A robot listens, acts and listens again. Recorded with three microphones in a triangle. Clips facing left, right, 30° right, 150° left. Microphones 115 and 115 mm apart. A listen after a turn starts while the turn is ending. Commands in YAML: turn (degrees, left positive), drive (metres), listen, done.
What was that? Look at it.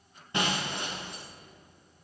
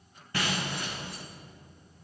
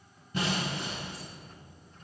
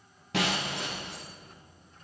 turn: 160
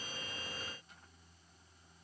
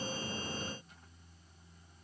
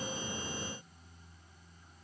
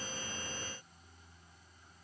done: "I heard breaking glass from this way, but can't make it out now."